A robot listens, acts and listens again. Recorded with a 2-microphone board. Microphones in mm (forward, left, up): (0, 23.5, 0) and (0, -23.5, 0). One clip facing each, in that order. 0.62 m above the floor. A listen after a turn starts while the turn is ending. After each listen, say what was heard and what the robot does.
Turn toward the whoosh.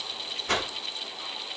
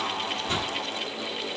The whoosh: about 55° left or 125° left. Turn 55° left.
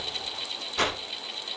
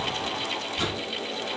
So it is at 65° left. Turn 65° left.
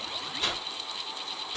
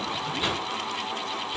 The whoosh is now 10° right. Turn 10° right.
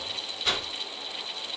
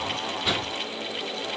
Facing the whoosh, 1 to 2 m away.